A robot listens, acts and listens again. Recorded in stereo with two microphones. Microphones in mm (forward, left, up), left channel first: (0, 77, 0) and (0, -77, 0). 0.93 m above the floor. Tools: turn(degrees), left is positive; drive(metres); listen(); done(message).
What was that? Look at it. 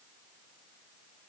listen()
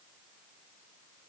listen()
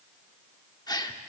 turn(degrees=25)
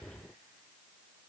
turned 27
listen()
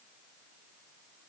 done("I heard a gasp, but can't make it out now. It was about straight ahead or 125° left.")